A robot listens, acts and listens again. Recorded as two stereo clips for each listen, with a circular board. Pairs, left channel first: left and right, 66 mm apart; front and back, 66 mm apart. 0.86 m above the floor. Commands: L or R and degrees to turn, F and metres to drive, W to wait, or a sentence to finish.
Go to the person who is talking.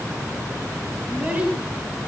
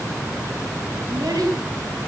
R160
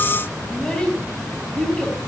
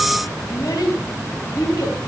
L15
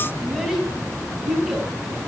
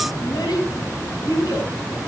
F1.0
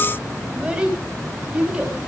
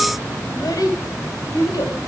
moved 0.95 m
R15
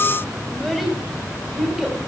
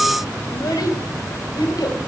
F1.0
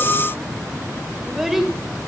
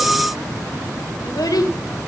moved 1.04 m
F1.0
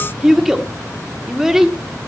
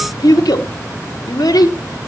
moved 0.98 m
F1.0
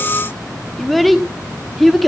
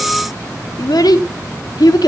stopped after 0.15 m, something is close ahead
Arrived at the child speaking, straight ahead.